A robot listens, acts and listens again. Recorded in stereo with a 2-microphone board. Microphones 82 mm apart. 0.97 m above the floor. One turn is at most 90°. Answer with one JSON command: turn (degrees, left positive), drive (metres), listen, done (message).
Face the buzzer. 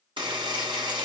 {"turn": -90}
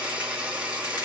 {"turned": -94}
{"turn": -10}
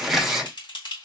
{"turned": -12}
{"done": "Facing the buzzer, 1 to 2 m away."}